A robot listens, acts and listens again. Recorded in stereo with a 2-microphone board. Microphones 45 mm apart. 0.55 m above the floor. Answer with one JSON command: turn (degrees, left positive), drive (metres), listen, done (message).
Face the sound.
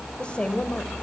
{"turn": 25}
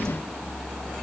{"listen": true}
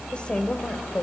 {"turn": 30}
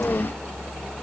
{"listen": true}
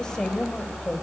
{"turn": 20}
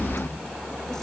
{"listen": true}
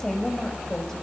{"turn": 30}
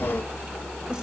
{"listen": true}
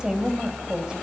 {"turn": -15}
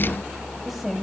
{"done": "Facing the woman speaking."}